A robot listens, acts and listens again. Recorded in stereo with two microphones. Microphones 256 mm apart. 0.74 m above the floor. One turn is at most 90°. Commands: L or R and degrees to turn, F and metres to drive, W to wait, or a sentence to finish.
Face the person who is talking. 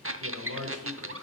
R65
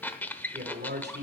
R40
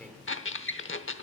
Facing the man speaking.